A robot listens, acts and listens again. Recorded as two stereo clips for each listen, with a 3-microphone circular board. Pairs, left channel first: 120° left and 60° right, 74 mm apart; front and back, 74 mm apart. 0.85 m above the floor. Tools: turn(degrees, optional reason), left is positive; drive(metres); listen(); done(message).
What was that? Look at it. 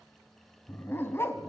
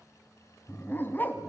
turn(degrees=65, reason="The dog barking: 65° left.")
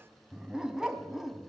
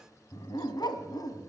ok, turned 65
turn(degrees=25, reason="The dog barking is now 25° left.")
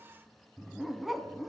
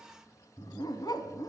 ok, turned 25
turn(degrees=30, reason="The dog barking is now 30° left.")
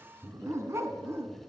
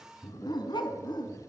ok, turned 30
done("Facing the dog barking.")